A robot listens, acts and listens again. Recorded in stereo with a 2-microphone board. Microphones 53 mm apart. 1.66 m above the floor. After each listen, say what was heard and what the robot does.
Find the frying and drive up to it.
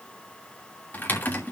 Keep listening.
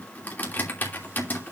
Keep listening.
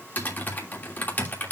I can't make out frying, only typing on a keyboard.